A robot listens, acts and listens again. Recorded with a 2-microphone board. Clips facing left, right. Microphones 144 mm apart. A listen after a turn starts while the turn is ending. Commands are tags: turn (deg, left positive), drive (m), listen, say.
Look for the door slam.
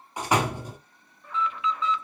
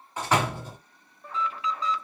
<turn deg="30"/>
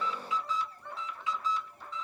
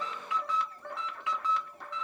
<listen/>
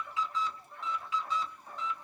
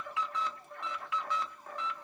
<say>I heard a door slam, but can't make it out now. It was about 15° right or 135° left.</say>